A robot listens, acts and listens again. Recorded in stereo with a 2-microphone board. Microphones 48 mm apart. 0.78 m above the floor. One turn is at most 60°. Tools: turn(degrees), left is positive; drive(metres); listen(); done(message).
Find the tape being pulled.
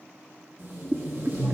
turn(degrees=-60)
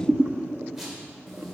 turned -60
done("Facing the tape being pulled.")